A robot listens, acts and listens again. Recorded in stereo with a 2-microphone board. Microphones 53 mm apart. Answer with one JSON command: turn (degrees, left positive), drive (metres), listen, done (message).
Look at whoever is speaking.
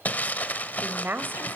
{"turn": -40}
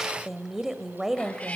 {"turn": -10}
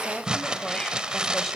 {"listen": true}
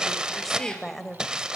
{"done": "Facing the woman speaking."}